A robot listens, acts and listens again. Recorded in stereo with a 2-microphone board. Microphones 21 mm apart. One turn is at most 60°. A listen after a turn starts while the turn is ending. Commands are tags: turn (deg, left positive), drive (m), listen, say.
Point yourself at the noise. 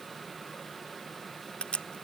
<turn deg="60"/>
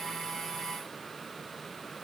<listen/>
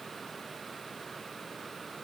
<say>I heard a crack, but can't make it out now. It was about 10° left or 50° left.</say>